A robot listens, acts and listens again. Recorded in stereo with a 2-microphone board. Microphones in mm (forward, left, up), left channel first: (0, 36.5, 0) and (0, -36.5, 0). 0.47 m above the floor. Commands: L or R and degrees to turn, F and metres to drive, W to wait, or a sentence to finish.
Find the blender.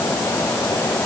W
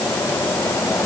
W
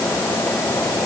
I can't make out a blender to turn to.